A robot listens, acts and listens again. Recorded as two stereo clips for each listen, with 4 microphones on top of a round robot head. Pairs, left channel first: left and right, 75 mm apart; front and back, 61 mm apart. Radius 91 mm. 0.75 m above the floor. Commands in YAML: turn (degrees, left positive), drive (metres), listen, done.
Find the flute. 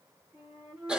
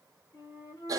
turn: -20
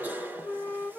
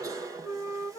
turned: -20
done: "Facing the flute, under 1 m away."